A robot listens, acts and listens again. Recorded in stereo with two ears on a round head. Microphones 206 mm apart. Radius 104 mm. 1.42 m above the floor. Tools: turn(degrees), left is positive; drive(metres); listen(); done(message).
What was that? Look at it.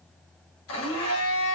turn(degrees=60)
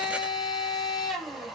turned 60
done("Found it: a blender, straight ahead.")